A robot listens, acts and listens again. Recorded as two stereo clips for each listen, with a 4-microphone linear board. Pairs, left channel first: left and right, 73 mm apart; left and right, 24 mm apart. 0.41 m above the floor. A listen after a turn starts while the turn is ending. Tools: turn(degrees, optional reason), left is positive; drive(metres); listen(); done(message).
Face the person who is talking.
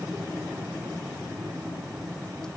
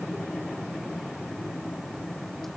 listen()
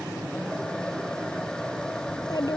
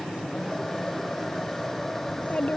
turn(degrees=60, reason="The child speaking: about 60° left or 120° left.")
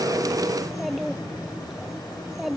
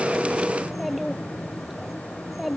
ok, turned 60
done("Found it: a child speaking, straight ahead.")